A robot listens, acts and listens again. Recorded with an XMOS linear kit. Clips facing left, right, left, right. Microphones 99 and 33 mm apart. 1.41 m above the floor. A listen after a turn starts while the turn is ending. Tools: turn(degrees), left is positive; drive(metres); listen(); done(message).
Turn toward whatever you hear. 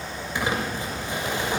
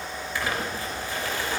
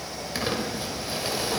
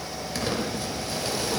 turn(degrees=20)
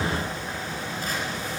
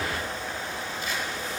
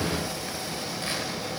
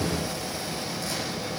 listen()
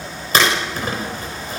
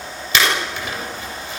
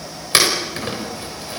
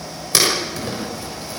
turn(degrees=140)
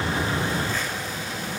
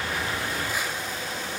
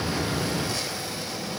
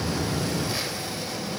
listen()
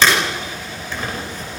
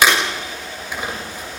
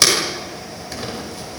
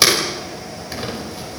turn(degrees=-15)
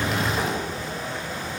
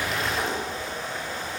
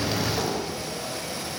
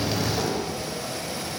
listen()
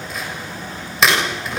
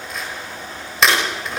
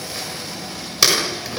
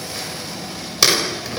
done("Facing the crumpling.")